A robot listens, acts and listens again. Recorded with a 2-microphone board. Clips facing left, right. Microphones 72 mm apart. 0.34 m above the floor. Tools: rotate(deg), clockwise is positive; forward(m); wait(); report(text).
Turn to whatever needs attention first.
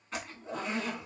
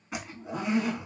wait()
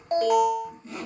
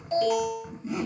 rotate(-50)
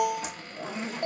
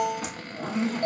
rotate(-15)
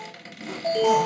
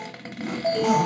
report("Found it: an alarm, straight ahead.")